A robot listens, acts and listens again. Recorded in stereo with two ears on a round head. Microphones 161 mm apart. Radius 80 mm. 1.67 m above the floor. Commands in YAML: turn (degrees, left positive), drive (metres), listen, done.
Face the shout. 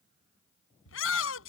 turn: 90
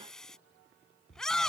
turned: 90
done: "Facing the shout."